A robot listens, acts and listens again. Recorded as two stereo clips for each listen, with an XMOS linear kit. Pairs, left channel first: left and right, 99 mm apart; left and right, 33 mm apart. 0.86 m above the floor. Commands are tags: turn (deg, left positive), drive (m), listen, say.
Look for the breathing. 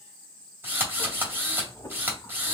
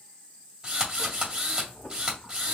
<turn deg="30"/>
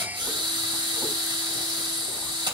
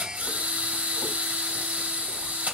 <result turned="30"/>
<listen/>
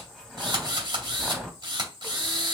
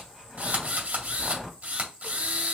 <say>Facing the breathing.</say>